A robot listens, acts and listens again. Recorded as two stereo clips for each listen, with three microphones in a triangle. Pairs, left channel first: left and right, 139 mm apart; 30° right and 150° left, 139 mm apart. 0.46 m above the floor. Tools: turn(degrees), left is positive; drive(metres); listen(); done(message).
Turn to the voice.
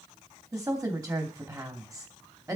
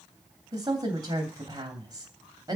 turn(degrees=-150)
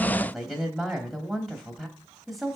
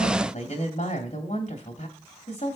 done("Facing the woman speaking, 2 to 4 m away.")